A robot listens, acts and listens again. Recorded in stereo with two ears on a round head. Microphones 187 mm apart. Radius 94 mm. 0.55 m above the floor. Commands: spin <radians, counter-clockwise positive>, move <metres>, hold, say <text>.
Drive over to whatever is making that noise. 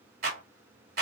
spin -0.87
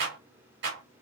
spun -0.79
spin -1.31
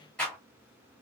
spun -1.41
move 1.0
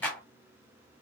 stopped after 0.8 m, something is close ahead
spin 0.17
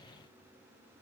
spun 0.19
hold
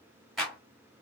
say Arrived at the clap, straight ahead.